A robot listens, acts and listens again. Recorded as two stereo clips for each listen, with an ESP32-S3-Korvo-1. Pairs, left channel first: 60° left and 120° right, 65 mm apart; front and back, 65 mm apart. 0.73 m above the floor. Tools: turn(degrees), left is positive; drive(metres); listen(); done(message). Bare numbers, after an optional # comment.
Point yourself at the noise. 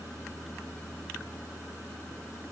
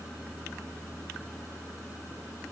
listen()
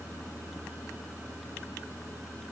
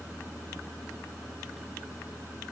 listen()
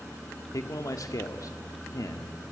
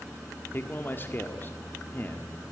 # The man speaking: 55° left.
turn(55)
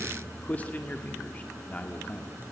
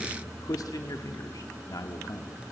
done("Found it: a man speaking, straight ahead.")